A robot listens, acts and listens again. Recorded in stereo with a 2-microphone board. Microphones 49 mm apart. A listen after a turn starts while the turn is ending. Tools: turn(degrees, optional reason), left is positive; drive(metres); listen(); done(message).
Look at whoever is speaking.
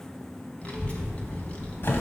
turn(degrees=30, reason="The child speaking: about 30° left or 150° left.")
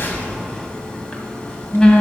turn(degrees=120, reason="So it is at 120° left.")
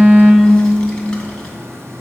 turn(degrees=15, reason="The child speaking is now 15° left.")
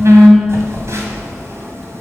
done("Found it: a child speaking, straight ahead.")